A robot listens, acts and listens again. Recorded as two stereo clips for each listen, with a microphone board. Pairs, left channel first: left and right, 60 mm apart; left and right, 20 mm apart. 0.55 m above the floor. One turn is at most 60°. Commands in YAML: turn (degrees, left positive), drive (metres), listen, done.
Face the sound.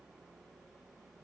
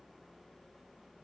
listen: true
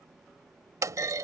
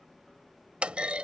turn: -60
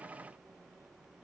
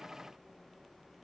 turn: -30
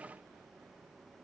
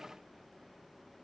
done: "I heard a clunk from this way, but can't make it out now."